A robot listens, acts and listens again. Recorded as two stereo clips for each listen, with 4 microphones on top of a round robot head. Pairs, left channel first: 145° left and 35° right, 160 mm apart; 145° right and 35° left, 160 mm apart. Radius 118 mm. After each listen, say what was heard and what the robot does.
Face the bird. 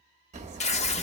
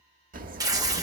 Facing the bird.